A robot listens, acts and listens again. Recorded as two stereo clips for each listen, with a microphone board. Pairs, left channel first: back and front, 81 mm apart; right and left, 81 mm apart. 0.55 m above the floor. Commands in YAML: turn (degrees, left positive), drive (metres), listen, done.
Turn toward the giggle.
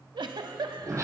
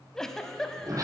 done: "Found it: a giggle, straight ahead, under 1 m away."